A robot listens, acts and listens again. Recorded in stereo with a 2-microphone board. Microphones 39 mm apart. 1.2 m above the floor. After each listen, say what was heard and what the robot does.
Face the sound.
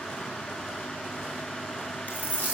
The dropped coin: about 40° left or 140° left. Turn 40° left.
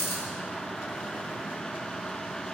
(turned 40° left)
So it is at 100° left. Turn 100° left.
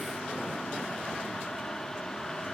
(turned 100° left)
Facing where the dropped coin came from. I can't hear it now.